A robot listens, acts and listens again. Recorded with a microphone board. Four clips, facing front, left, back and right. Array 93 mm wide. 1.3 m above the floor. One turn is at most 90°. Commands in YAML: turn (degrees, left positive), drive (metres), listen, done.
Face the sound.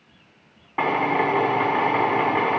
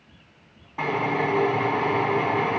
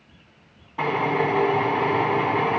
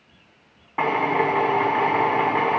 turn: -40
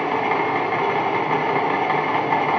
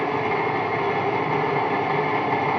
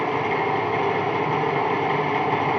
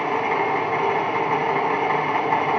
turn: -15
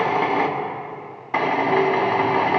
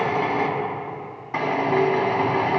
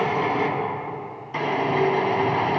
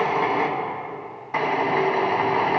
done: "Facing the drill, 1 to 2 m away."